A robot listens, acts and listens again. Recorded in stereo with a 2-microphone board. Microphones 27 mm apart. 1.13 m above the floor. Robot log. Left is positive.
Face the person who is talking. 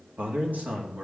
note: The man speaking: about 75° right or 105° right.
cmd yaw -75
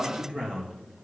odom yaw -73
note: So it is at 30° right.
cmd yaw -30
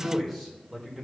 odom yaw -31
end: Found it: a man speaking, straight ahead, over 4 m away.